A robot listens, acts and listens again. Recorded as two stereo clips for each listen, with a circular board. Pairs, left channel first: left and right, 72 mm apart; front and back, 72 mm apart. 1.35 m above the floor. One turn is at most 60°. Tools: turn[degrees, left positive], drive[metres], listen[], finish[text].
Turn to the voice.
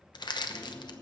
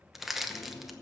Action: listen[]
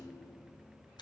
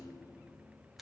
Action: listen[]
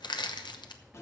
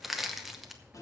Action: finish[I can't make out anyone speaking, only crushing and a rattle.]